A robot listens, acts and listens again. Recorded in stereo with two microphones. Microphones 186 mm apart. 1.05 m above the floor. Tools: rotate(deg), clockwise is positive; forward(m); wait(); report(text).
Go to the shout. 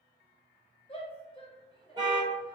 rotate(-25)
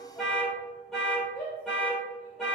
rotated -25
rotate(-130)
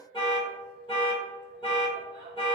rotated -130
wait()
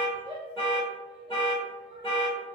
rotate(25)
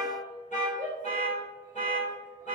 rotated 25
rotate(10)
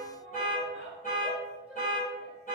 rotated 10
forward(1.0)
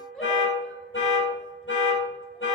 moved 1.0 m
wait()
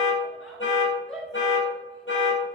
forward(1.0)
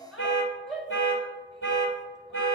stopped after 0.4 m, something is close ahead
report("I am next to the shout.")